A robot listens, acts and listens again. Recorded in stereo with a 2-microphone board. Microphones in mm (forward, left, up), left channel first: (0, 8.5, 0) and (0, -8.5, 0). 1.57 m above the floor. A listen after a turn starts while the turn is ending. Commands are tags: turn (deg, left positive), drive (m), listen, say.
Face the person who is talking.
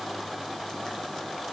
<listen/>
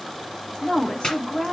<turn deg="90"/>
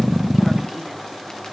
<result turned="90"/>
<listen/>
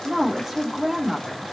<turn deg="-15"/>
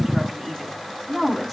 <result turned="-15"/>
<say>Facing the woman speaking.</say>